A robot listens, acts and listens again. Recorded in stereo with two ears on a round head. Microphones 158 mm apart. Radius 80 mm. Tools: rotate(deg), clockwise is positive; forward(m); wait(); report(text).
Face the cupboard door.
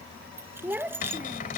rotate(-50)
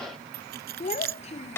rotate(-15)
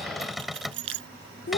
report("Facing the cupboard door.")